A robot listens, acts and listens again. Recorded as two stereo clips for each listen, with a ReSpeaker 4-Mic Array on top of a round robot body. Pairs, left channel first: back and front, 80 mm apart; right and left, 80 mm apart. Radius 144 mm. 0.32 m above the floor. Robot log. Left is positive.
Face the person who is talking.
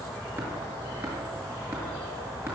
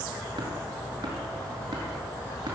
cmd idle
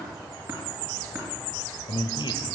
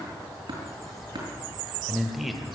note: The man speaking: straight behind.
cmd yaw +180
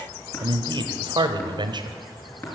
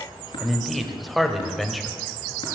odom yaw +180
end: Facing the man speaking, 1 to 2 m away.